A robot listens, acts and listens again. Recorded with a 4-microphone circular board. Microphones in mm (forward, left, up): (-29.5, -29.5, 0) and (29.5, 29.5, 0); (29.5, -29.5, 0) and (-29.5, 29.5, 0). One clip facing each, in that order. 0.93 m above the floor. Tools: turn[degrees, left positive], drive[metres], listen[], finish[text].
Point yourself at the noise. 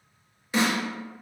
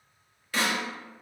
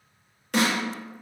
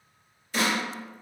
Thought: The snare drum: 65° right.
Action: turn[-65]
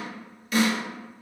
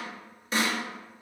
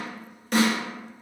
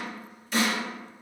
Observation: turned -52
Thought: The snare drum is now 15° right.
Action: turn[-15]
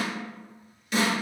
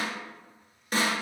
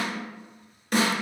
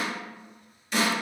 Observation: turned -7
Action: finish[Facing the snare drum, under 1 m away.]